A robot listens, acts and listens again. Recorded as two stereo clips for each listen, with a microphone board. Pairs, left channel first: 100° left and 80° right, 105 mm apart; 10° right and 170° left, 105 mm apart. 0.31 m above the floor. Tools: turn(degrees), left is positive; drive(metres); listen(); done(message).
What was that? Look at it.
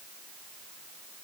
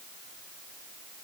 listen()
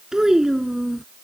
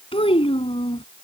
done("Found it: a child speaking, straight ahead.")